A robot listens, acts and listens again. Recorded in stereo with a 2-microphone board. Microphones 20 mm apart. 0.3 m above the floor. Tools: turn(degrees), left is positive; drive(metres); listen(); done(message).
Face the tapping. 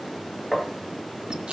turn(degrees=30)
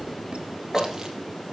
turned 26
turn(degrees=150)
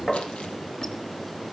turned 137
turn(degrees=15)
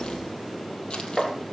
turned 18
done("Facing the tapping.")